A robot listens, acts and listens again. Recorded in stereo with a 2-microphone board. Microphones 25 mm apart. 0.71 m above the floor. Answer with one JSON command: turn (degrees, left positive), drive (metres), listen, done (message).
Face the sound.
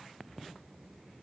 {"listen": true}
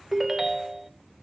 {"turn": -30}
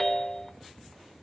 {"turn": 15}
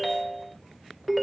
{"done": "Found it: a ringtone, straight ahead."}